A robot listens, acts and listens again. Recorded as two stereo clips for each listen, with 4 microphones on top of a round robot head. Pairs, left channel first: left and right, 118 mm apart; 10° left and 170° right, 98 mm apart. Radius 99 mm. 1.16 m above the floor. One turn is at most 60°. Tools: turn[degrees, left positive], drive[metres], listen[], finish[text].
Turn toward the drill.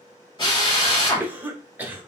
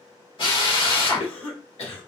Thought: The drill: 40° left.
Action: turn[40]
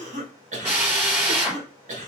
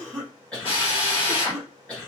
Thought: The drill is now 15° right.
Action: turn[-15]
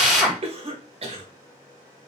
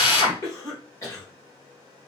Action: finish[Facing the drill.]